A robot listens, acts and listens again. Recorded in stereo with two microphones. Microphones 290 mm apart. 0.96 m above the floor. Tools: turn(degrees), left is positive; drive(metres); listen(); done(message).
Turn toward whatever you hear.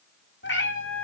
turn(degrees=45)
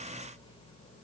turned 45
listen()
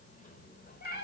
turn(degrees=35)
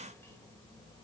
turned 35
listen()
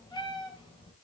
turn(degrees=15)
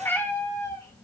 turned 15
turn(degrees=10)
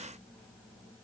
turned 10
listen()
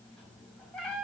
done("Found it: a cat meowing, straight ahead, 2 to 4 m away.")